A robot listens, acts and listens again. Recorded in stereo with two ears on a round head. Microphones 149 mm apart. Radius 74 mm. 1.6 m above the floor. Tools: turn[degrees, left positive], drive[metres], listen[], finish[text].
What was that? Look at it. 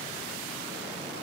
Action: listen[]
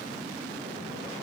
Action: listen[]
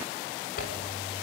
Thought: The zipper: about 60° left or 120° left.
Action: turn[60]
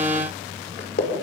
Thought: So it is at 55° left.
Action: turn[55]
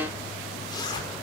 Thought: The zipper is now 25° left.
Action: turn[25]
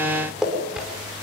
Action: finish[Found it: a zipper, straight ahead, over 4 m away.]